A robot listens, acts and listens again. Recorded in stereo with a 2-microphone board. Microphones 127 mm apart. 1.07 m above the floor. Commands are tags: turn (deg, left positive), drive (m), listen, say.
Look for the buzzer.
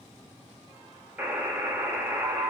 <turn deg="-30"/>
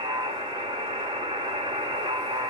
<turn deg="-135"/>
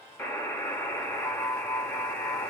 <turn deg="15"/>
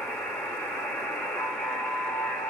<say>Facing the buzzer, under 1 m away.</say>